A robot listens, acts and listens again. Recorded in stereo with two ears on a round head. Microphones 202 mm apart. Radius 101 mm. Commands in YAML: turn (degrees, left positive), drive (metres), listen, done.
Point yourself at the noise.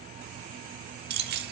turn: -45
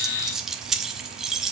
done: "Facing the keys jangling, 1 to 2 m away."